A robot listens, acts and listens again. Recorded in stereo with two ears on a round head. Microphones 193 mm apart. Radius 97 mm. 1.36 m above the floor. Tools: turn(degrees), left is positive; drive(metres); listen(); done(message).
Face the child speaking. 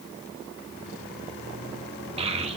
turn(degrees=-30)
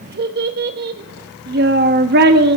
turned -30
turn(degrees=-115)
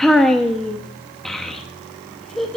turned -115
done("Facing the child speaking.")